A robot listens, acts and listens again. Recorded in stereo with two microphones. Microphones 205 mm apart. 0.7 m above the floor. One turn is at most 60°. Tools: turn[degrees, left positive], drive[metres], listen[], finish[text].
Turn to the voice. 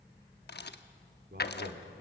Thought: The man speaking: about 55° right or 125° right.
Action: turn[-55]
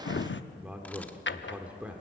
Action: finish[Facing the man speaking.]